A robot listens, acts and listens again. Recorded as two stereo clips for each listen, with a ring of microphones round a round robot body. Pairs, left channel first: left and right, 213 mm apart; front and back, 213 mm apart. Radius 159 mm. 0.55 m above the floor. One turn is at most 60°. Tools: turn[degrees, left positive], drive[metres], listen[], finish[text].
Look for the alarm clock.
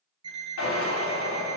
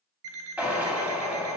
Thought: The alarm clock: 165° right.
Action: turn[-60]
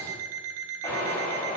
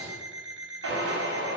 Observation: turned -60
Thought: The alarm clock is now 90° right.
Action: turn[-60]
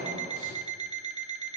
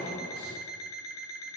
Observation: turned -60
Thought: The alarm clock is now 30° right.
Action: turn[-30]
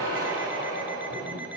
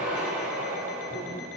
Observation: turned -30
Action: listen[]
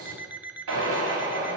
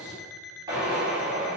Action: finish[Found it: an alarm clock, straight ahead.]